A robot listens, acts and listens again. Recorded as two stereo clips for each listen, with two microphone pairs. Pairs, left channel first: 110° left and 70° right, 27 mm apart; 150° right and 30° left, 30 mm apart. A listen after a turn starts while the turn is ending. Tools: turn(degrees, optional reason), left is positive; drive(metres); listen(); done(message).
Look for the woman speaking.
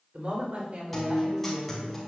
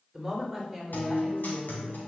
turn(degrees=-55, reason="The woman speaking: 55° right.")
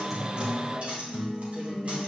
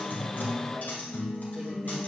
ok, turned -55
listen()
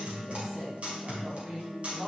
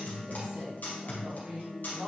turn(degrees=-20, reason="The woman speaking is now 20° right.")
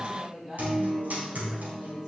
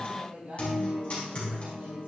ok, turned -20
done("Found it: a woman speaking, straight ahead, over 4 m away.")